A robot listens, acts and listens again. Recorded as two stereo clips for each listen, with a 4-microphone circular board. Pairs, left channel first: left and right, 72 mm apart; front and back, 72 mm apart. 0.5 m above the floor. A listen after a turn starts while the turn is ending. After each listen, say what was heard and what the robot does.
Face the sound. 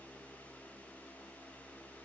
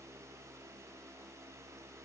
Keep listening.
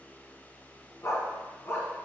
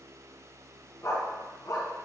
The dog barking: 35° left. Turn 35° left.
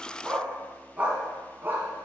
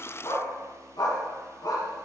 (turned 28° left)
The dog barking is now 25° right. Turn 25° right.
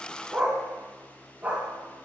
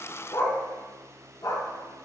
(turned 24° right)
The dog barking is now 20° right. Turn 20° right.
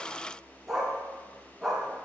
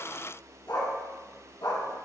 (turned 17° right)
Found it: a dog barking, straight ahead, 2 to 4 m away.